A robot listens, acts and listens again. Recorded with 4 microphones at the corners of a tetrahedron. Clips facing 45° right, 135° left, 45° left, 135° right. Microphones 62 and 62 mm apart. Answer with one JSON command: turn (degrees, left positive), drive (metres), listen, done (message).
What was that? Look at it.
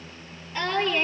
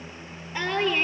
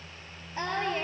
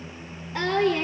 {"turn": -155}
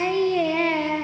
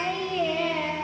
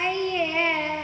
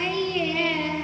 {"turn": -25}
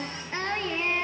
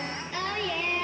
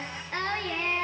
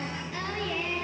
{"done": "Found it: singing, straight ahead, 2 to 4 m away."}